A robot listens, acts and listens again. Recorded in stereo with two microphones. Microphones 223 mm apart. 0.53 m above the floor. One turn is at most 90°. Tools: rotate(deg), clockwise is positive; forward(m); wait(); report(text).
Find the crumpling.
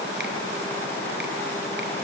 wait()
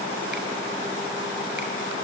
wait()
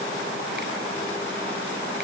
report("I can't make out crumpling.")